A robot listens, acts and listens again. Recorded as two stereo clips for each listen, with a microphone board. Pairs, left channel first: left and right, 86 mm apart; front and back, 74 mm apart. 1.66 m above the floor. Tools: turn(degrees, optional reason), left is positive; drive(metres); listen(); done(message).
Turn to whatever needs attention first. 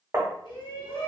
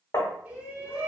turn(degrees=110, reason="The shout: 110° left.")
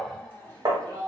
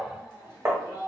turn(degrees=25, reason="The shout is now 25° left.")
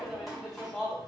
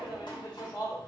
done("Found it: a shout, straight ahead.")